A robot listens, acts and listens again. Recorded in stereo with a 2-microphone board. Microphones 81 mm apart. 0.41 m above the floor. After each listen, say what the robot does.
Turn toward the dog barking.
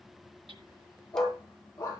Turn 40° left.
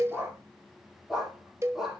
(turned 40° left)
Facing the dog barking.